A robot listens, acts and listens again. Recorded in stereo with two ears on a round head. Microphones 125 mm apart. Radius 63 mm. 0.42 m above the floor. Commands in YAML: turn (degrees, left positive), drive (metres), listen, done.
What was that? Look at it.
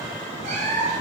turn: -55
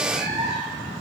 done: "Found it: a cat meowing, straight ahead."